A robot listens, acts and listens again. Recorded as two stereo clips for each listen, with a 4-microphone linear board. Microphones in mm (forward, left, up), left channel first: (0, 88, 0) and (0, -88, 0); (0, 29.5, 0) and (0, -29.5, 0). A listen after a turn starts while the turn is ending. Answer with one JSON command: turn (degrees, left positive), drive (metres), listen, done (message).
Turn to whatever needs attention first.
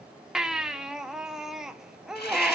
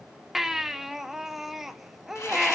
{"turn": -30}
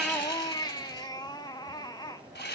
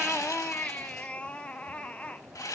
{"turn": 25}
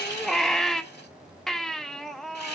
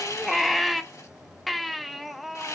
{"done": "Found it: a baby crying, straight ahead."}